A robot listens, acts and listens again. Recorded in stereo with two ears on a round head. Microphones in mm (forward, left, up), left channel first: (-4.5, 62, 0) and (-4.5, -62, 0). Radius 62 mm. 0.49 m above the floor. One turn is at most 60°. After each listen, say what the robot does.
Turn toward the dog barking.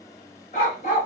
Turn 55° left.
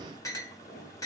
Keep listening.
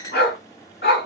Turn 60° left.
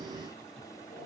Turn 30° left.
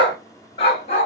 Turn 45° left.
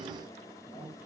Keep listening.
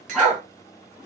Facing the dog barking, 1 to 2 m away.